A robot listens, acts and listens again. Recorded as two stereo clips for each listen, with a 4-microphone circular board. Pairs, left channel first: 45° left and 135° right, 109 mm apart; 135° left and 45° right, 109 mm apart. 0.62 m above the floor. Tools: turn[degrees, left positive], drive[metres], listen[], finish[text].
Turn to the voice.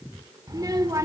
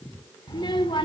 Thought: The child speaking: 170° left.
Action: turn[170]
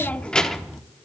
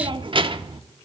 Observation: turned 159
Thought: The child speaking is now 50° right.
Action: turn[-50]
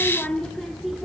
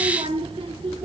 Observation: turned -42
Thought: The child speaking is now 45° right.
Action: turn[-45]
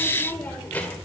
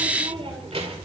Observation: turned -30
Thought: The child speaking is now 30° right.
Action: turn[-30]
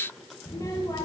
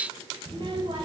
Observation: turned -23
Thought: The child speaking is now 10° right.
Action: turn[-10]
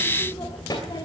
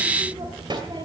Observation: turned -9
Action: finish[Found it: a child speaking, straight ahead, 2 to 4 m away.]